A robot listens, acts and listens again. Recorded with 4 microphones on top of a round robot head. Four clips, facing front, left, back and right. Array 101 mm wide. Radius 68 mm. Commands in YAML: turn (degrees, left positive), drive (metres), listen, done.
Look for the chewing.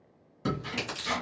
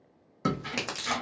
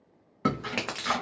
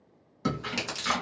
turn: 160
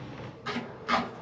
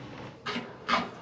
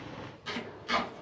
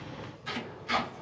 listen: true
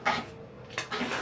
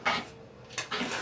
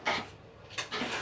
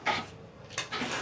turn: -15
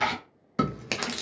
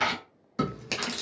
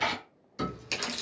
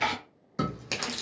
done: "Facing the chewing."